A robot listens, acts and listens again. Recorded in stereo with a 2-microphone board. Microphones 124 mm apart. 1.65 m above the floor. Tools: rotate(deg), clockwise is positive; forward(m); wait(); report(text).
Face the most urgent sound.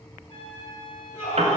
rotate(-90)
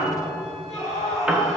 report("Found it: a scream, straight ahead.")